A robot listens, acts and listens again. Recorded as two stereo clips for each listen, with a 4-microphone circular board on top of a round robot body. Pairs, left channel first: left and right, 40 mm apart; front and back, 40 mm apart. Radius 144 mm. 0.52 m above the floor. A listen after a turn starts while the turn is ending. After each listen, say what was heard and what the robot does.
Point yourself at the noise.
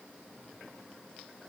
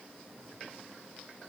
Keep listening.
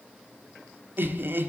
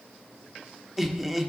The laughter: 95° right. Turn 95° right.
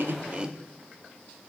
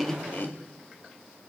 The laughter is now 25° right. Turn 25° right.
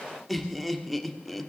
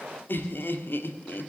Facing the laughter, 1 to 2 m away.